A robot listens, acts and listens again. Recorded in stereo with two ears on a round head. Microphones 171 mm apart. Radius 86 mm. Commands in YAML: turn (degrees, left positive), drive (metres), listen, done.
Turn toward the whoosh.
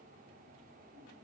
listen: true
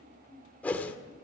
turn: 30
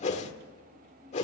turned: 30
turn: 140
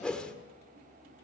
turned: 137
done: "Facing the whoosh, 1 to 2 m away."